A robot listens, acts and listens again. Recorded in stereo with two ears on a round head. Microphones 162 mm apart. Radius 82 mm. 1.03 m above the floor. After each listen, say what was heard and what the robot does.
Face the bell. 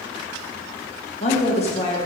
Keep listening.
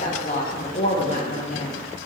Keep listening.
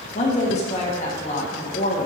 I can't make out a bell to turn to.